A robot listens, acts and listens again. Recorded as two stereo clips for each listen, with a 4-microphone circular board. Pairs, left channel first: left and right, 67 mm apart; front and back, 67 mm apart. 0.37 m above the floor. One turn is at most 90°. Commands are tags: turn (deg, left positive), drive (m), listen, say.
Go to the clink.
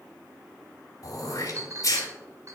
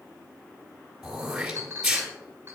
<turn deg="-90"/>
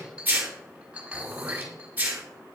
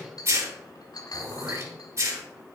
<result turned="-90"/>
<turn deg="-15"/>
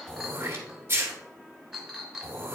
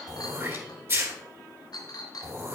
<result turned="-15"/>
<drive m="1.0"/>
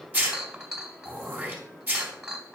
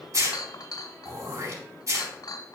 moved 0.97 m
<turn deg="-10"/>
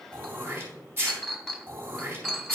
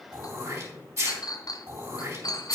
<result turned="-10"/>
<drive m="1.0"/>
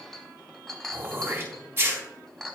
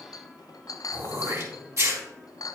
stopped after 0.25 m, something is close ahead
<say>Arrived at the clink, straight ahead.</say>